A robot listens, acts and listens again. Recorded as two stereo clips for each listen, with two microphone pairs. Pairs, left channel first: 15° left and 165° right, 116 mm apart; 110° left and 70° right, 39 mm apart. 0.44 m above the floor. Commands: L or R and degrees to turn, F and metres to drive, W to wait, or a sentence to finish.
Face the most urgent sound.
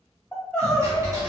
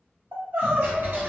R65
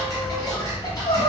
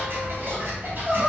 Found it: crying, straight ahead.